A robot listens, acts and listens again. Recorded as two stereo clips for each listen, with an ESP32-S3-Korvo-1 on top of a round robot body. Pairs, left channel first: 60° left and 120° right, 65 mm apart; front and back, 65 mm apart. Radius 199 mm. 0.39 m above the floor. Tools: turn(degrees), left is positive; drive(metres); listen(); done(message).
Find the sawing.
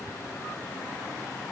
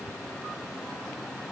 listen()
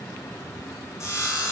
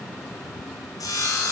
turn(degrees=20)
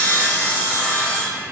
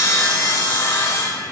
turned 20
done("Facing the sawing.")